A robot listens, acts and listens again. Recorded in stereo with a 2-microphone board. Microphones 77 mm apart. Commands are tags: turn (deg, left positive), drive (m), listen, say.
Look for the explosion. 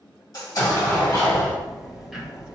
<turn deg="45"/>
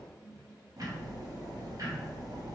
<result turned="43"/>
<listen/>
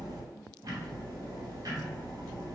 <say>I heard an explosion, but can't make it out now. It was about straight ahead or 90° left.</say>